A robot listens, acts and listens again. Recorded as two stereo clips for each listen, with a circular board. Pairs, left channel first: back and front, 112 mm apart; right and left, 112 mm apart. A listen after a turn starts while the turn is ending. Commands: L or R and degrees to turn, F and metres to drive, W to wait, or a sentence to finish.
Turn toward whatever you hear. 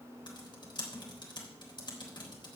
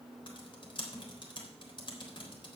R130
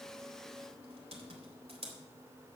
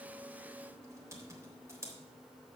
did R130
L25
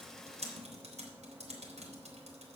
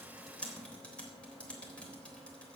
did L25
R10
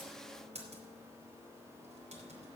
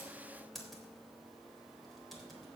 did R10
Facing the typing on a keyboard.